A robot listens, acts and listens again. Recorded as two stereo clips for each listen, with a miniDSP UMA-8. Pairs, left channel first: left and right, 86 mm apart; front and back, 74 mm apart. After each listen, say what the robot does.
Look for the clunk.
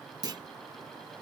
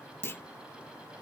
Turn 55° right.
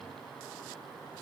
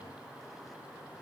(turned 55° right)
I heard a clunk from this way, but can't make it out now.